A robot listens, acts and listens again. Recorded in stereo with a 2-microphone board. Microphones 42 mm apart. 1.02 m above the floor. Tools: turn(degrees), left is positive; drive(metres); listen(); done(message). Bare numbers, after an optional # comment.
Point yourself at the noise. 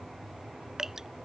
turn(-30)
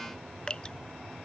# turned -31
# So it is at 20° left.
turn(20)
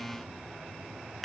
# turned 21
done("Facing the dripping.")